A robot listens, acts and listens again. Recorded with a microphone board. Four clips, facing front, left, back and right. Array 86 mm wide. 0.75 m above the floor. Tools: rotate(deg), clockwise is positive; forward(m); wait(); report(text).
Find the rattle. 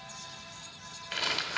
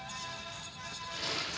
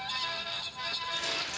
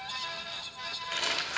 rotate(45)
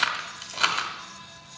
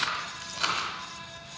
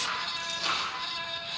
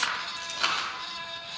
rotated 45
report("Facing the rattle, 1 to 2 m away.")